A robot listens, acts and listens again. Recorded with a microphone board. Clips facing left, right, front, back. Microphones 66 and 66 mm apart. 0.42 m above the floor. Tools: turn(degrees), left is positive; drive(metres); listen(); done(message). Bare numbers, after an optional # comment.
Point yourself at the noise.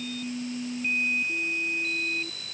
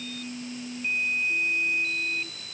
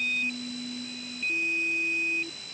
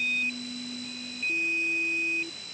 listen()
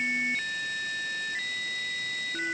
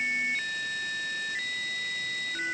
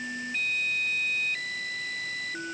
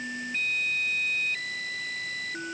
listen()
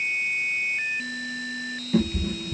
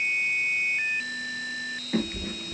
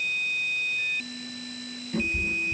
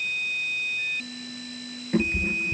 # The cat meowing: 135° right.
turn(-135)
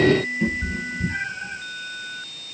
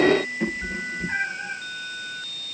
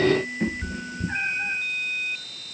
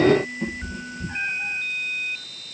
# The cat meowing is now 45° right.
turn(-45)
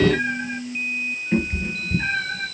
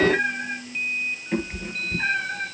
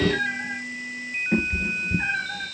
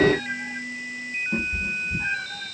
# The cat meowing is now 10° right.
turn(-10)
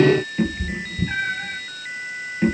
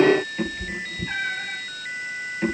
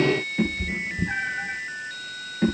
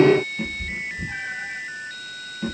done("Found it: a cat meowing, straight ahead.")